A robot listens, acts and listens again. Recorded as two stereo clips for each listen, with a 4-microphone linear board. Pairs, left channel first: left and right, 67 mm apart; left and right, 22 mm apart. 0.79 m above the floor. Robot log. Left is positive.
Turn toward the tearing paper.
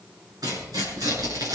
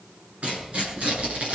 note: The tearing paper: about 60° right or 120° right.
cmd yaw -60
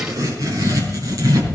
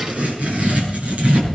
note: So it is at 55° right.
cmd yaw -55
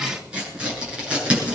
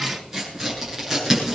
note: The tearing paper is now 15° right.
cmd yaw -15
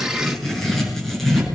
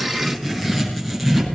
end: Facing the tearing paper.